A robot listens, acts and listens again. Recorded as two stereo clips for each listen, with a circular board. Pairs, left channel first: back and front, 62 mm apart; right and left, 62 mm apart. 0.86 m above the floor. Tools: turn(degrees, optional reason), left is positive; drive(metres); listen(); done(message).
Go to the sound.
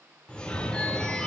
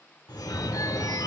turn(degrees=-105, reason="The phone ringing: 105° right.")
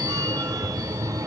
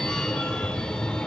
turn(degrees=-15, reason="The phone ringing is now 15° right.")
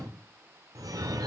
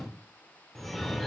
drive(metres=1.0)
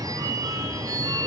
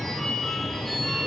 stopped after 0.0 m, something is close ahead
done("Something is in my way. I am facing the phone ringing but have not reached it.")